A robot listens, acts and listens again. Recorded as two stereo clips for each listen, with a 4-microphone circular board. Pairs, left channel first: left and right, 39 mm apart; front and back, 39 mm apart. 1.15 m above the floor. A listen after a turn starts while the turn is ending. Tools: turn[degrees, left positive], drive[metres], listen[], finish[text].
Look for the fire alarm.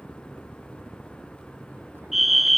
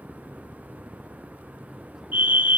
Thought: The fire alarm: 175° right.
Action: turn[-175]
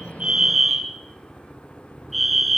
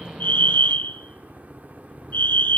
Action: finish[Facing the fire alarm, 1 to 2 m away.]